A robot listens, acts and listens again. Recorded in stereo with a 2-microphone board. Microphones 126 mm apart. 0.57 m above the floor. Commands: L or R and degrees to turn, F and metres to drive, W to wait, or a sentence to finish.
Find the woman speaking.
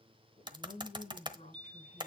L65
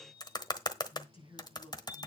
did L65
L45
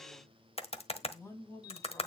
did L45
L20
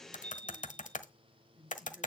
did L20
Facing the woman speaking.